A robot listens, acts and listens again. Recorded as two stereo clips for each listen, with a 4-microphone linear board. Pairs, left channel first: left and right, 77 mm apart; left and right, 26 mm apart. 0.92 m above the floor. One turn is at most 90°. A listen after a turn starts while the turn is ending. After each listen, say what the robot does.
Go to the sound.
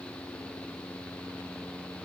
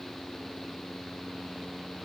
Keep listening.
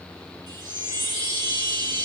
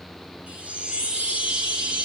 Turn 70° right.
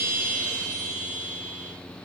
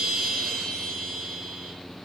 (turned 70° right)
Drive 1.0 m forward.
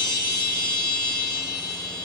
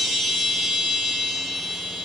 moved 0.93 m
Drive 1.0 m forward.
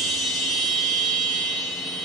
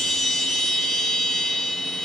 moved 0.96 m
Drive 1.0 m forward.
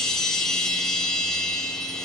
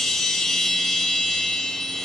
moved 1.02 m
Drive 1.0 m forward.
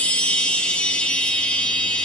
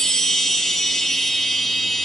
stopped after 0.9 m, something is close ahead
Turn 15° left.
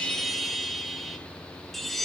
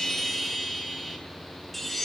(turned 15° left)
I am next to the chime.